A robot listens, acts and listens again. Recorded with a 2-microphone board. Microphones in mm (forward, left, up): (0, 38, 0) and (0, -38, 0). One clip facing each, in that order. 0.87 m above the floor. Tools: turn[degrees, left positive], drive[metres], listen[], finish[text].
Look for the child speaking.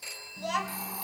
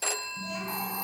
Action: turn[90]
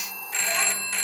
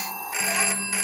Action: listen[]
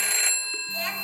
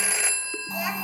Thought: The child speaking is now 15° right.
Action: turn[-15]
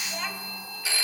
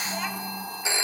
Action: finish[Found it: a child speaking, straight ahead.]